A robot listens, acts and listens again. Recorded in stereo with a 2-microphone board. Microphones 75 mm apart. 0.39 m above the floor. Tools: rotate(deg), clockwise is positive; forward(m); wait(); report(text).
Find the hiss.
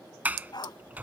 wait()
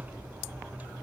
wait()
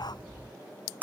report("I can't make out a hiss, only a sliding door and a dog barking.")